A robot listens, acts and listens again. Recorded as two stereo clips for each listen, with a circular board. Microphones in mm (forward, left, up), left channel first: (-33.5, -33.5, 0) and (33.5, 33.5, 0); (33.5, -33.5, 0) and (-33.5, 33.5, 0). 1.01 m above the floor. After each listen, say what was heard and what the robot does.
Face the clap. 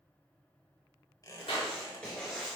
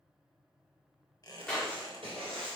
The clap: 125° right. Turn 125° right.
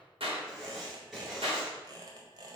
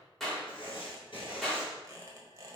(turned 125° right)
The clap is now 45° left. Turn 45° left.
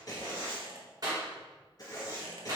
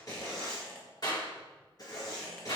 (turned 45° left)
Found it: a clap, straight ahead.